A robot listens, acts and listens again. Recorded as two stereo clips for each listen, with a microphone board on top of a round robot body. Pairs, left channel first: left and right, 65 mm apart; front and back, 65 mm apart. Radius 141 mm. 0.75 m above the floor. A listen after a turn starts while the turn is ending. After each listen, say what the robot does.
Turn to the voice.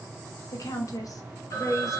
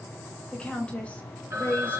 Turn 60° left.
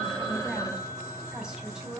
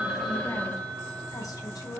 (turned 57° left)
Keep listening.
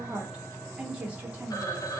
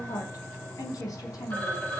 Turn 25° right.
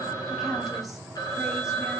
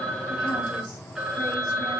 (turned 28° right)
Keep listening.
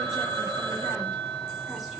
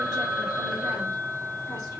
Keep listening.
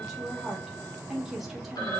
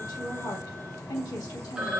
Found it: a woman speaking, straight ahead.